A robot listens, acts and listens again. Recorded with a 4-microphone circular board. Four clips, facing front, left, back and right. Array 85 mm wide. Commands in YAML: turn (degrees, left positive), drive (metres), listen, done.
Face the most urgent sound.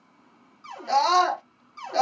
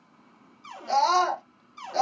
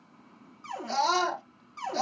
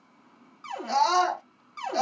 done: "Facing the scream."